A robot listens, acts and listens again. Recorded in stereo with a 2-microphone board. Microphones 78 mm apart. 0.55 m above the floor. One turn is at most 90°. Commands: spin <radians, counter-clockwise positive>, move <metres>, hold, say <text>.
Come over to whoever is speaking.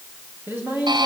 spin -0.52
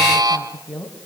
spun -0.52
move 1.0
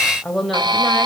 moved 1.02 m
move 1.0
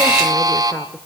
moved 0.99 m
hold
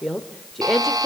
move 1.0
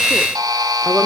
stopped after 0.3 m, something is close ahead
hold
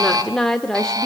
say Arrived at the woman speaking, straight ahead.